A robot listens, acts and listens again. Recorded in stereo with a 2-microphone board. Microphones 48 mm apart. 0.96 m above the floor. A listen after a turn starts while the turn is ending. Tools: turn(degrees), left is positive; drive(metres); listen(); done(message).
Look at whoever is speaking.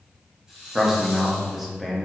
turn(degrees=-30)
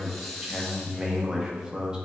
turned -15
turn(degrees=-165)
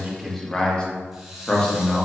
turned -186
turn(degrees=25)
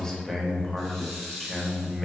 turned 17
done("Found it: a man speaking, straight ahead.")